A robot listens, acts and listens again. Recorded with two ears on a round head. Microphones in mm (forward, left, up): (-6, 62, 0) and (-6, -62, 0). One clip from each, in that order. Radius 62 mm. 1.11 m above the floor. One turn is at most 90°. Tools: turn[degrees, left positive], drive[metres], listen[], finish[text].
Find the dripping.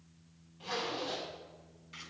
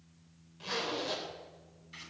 Action: listen[]
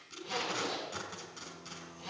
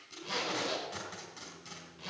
Action: listen[]
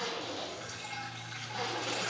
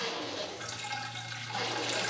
Thought: The dripping: about 75° right or 105° right.
Action: turn[-75]
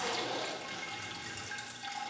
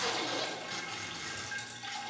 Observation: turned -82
Action: finish[Found it: dripping, straight ahead.]